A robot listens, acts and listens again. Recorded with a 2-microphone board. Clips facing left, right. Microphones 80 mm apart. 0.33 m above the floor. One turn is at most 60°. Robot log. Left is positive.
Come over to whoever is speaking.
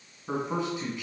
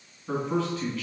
note: The man speaking: about 20° left or 160° left.
cmd yaw +20
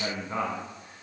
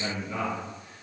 note: So it is at 140° left.
cmd yaw +60
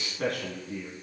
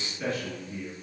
note: The man speaking is now 90° left.
cmd yaw +60
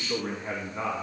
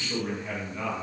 note: The man speaking is now 40° left.
cmd yaw +40
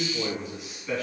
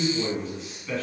note: The man speaking is now 10° left.
cmd yaw +10
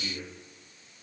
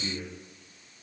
cmd fwd 1.0
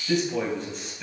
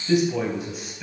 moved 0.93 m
cmd fwd 1.0
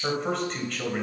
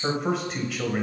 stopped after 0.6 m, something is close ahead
note: The man speaking is now 10° right.
cmd yaw -10
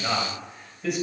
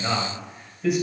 end: Arrived at the man speaking, straight ahead.